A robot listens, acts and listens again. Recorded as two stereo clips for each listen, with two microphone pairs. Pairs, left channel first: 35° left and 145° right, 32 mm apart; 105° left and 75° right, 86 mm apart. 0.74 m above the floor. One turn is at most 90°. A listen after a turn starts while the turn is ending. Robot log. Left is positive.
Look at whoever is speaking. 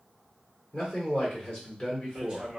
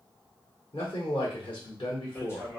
note: The man speaking: 100° left.
cmd yaw +90
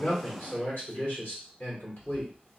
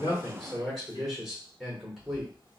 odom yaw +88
note: The man speaking is now 10° left.
cmd yaw +10
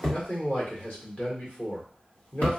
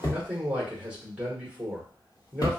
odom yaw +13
end: Facing the man speaking.